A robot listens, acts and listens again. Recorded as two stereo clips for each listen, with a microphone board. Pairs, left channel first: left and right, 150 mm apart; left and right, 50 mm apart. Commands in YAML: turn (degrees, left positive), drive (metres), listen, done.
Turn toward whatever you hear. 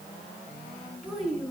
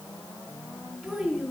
turn: 30
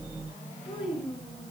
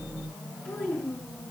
turn: 145
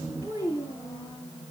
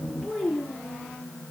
turn: -25
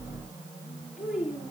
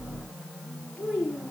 done: "Facing the child speaking, over 4 m away."